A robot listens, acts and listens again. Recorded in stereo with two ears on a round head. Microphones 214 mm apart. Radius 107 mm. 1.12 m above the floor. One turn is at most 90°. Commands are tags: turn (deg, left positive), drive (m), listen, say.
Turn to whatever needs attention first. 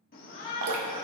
<turn deg="45"/>
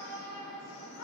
<turn deg="90"/>
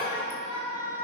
<turn deg="25"/>
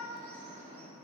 <say>Found it: a shout, straight ahead.</say>